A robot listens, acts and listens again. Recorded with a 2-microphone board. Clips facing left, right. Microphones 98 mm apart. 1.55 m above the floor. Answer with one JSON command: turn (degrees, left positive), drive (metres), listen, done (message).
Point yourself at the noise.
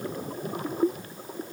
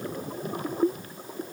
{"listen": true}
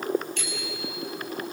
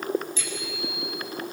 {"turn": 60}
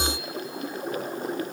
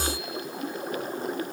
{"listen": true}
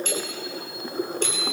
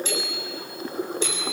{"turn": 55}
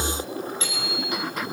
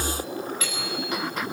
{"turn": 30}
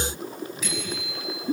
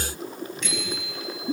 {"done": "Facing the bicycle bell, over 4 m away."}